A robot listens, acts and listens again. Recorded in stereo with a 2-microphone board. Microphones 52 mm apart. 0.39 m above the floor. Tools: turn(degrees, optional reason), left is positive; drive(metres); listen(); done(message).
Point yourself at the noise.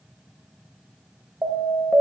turn(degrees=-50, reason="The alarm: about 50° right or 130° right.")
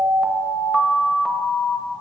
done("Found it: an alarm, straight ahead.")